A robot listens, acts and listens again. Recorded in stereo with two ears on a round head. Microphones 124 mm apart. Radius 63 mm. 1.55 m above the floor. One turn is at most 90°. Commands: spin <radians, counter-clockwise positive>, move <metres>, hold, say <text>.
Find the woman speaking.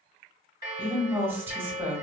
spin -0.26
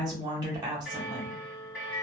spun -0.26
spin -1.57
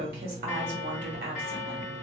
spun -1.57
spin -1.40
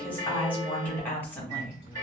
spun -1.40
spin 0.17
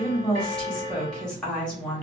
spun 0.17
say Facing the woman speaking, 1 to 2 m away.